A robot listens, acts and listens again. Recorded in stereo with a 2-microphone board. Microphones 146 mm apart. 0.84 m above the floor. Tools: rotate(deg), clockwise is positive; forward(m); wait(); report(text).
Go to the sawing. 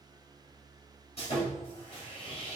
rotate(-45)
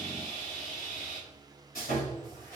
rotate(-90)
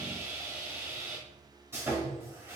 rotate(15)
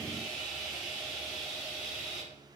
forward(1.0)
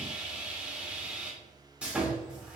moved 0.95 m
rotate(10)
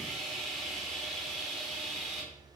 forward(1.0)
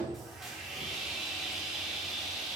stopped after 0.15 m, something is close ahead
report("Arrived at the sawing, straight ahead.")